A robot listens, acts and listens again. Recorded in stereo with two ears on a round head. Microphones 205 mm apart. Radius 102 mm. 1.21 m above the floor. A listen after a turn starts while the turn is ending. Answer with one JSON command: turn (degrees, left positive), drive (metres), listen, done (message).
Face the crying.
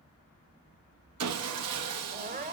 {"turn": -40}
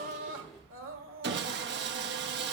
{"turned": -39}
{"turn": -95}
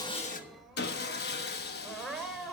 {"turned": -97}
{"done": "Found it: crying, straight ahead, 1 to 2 m away."}